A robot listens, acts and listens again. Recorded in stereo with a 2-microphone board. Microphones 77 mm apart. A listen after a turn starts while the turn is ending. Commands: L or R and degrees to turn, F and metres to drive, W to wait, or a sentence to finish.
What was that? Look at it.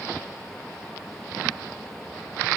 W
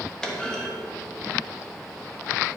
L30
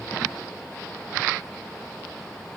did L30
W
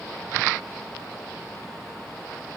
I heard a clunk, but can't make it out now. It was about 20° right or 140° left.